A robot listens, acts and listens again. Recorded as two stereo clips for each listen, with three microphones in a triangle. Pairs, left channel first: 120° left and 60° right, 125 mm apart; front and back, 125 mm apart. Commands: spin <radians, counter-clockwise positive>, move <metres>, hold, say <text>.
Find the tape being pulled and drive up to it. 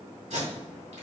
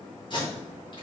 spin -0.79
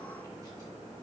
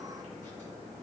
hold
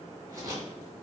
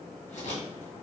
move 1.0
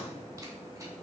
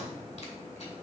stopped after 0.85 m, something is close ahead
hold
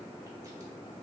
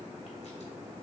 hold
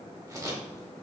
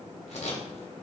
say I am next to the tape being pulled.